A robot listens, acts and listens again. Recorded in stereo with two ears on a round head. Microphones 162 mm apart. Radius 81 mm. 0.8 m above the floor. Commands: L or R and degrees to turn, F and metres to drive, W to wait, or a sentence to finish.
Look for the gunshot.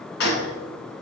L60
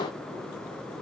W
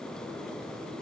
I heard a gunshot, but can't make it out now. It was about straight ahead or 60° left.